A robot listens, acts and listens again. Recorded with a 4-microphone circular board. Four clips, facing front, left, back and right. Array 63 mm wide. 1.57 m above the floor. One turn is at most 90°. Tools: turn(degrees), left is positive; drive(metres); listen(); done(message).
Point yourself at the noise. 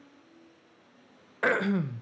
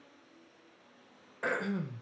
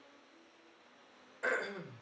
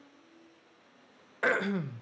turn(degrees=-25)
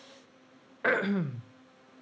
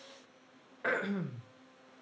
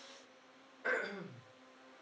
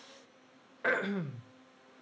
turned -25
turn(degrees=-10)
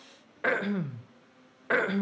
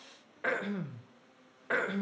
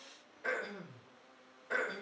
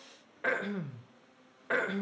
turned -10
done("Facing the throat clearing.")